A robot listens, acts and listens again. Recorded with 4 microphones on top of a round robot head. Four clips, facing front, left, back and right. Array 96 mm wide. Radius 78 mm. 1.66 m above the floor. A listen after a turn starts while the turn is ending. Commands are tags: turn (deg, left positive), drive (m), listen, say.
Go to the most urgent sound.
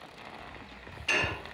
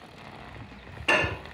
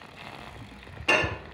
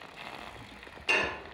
<listen/>
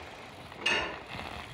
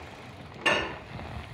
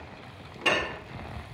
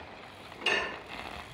<listen/>
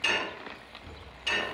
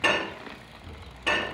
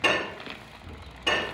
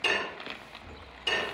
<say>I can't make out anything urgent, only dishes clattering.</say>